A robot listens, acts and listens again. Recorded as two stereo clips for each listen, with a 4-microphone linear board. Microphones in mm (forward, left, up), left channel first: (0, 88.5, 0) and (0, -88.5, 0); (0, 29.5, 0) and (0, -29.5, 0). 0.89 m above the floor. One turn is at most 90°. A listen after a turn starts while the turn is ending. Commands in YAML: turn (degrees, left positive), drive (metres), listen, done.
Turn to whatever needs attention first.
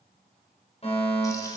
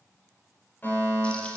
turn: 35
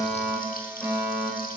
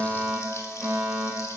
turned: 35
done: "Found it: a fire alarm, straight ahead, over 4 m away."